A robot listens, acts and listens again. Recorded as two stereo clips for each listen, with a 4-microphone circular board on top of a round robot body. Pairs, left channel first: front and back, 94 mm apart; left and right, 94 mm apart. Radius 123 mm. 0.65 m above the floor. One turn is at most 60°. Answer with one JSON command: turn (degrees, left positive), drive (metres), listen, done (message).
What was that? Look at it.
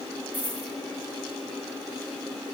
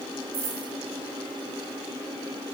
{"turn": -60}
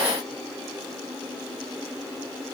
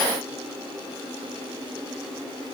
{"turn": -45}
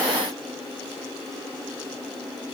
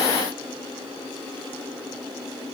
{"done": "I heard a dropped coin from this way, but can't make it out now."}